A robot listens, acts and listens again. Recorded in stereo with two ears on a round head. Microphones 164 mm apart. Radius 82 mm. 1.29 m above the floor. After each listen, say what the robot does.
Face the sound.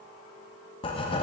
Turn 30° left.
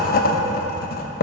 Turn 115° left.
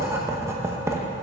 Turn 15° right.
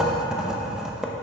Found it: writing, straight ahead, under 1 m away.